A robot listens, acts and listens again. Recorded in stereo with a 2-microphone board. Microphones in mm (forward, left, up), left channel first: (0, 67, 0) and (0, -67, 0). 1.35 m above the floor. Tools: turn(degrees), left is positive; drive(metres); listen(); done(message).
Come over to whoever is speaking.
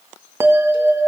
listen()
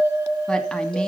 turn(degrees=30)
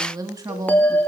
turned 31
turn(degrees=-25)
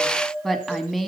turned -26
drive(metres=1.0)
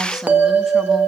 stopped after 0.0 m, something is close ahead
listen()
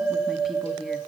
listen()
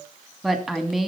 done("Something is in my way. I am facing the woman speaking but have not reached it.")